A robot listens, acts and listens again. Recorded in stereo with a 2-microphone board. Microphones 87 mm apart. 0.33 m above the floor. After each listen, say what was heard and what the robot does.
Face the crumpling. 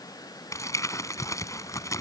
The crumpling: about 35° left or 145° left. Turn 35° left.
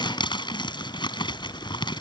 So it is at 105° left. Turn 105° left.
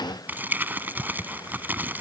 The crumpling is now 20° right. Turn 20° right.
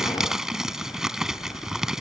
Facing the crumpling.